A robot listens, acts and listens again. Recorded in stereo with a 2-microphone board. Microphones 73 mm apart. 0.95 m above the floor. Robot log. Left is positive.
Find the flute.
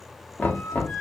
note: The flute: about 45° left or 135° left.
cmd yaw +45
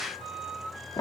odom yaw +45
end: Found it: a flute, straight ahead, 1 to 2 m away.